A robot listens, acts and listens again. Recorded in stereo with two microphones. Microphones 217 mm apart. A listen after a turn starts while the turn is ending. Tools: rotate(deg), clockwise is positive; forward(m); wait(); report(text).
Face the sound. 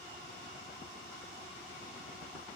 wait()
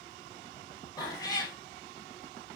rotate(-15)
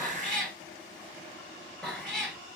report("Found it: a cat meowing, straight ahead.")